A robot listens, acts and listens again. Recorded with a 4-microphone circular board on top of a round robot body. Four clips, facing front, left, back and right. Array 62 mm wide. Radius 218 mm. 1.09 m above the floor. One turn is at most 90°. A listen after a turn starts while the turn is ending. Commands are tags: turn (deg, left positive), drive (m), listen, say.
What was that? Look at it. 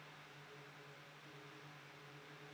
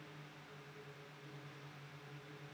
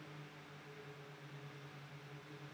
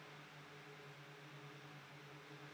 <listen/>
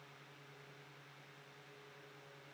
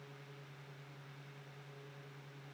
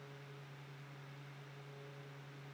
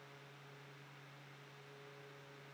<listen/>
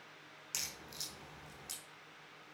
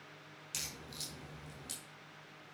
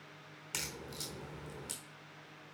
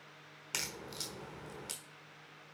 <turn deg="-90"/>
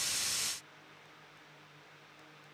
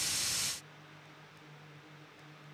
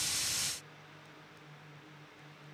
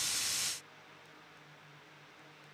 <turn deg="-15"/>
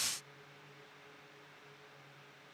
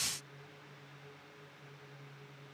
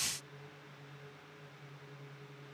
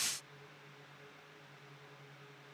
<say>I heard a crack from this way, but can't make it out now.</say>